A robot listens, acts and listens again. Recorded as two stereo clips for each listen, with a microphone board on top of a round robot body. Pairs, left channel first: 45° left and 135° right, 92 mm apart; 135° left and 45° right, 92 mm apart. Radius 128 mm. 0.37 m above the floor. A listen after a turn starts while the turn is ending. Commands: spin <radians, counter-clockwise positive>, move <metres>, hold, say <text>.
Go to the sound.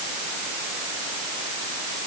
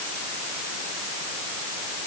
hold
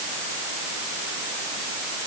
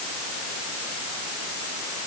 hold
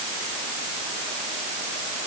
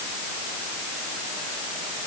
say I can't make out anything.